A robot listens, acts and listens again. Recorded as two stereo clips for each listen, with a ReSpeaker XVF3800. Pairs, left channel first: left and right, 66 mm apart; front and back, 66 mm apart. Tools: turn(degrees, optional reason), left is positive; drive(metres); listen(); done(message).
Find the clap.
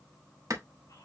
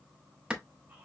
turn(degrees=-105, reason="The clap: 105° right.")
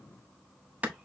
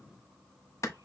turn(degrees=-30, reason="The clap is now 30° right.")
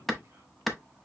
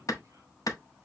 done("Facing the clap.")